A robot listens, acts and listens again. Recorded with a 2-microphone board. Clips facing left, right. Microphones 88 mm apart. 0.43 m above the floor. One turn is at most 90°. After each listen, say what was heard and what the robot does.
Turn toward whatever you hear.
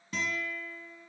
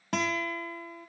Turn 90° right.
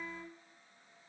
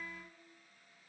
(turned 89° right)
So it is at 15° left. Turn 15° left.
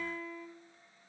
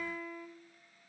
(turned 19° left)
Found it: a guitar, straight ahead, under 1 m away.